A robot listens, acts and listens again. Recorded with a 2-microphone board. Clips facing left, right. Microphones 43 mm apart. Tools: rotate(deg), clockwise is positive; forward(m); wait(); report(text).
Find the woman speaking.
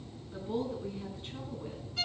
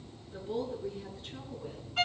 rotate(-30)
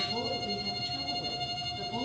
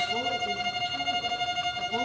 wait()
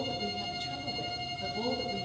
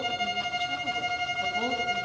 rotate(25)
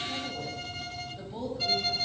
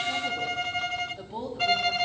rotate(15)
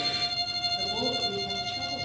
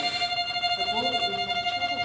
wait()
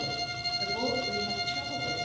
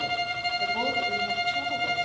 wait()
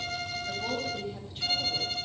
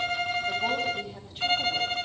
report("Facing the woman speaking.")